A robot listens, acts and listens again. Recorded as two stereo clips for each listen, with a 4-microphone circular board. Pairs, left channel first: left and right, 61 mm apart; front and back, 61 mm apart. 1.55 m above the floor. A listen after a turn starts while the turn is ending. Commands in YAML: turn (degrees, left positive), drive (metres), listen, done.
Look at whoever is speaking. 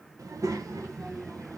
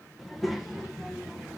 turn: -95
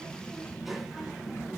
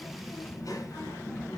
done: "Found it: a child speaking, straight ahead, under 1 m away."